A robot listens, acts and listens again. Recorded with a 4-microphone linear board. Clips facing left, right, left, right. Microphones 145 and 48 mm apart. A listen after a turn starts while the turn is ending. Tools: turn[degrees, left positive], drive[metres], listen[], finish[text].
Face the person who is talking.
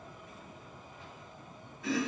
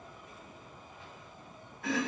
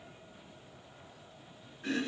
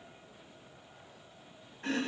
Action: listen[]
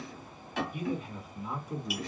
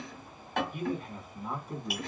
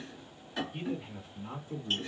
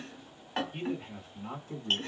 Thought: The man speaking: about 55° right or 125° right.
Action: turn[-55]
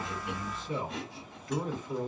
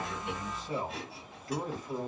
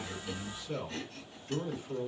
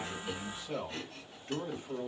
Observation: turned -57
Thought: So it is at 45° right.
Action: turn[-45]
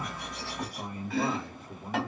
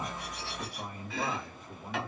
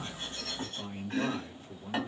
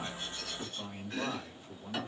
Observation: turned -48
Action: finish[Found it: a man speaking, straight ahead, 1 to 2 m away.]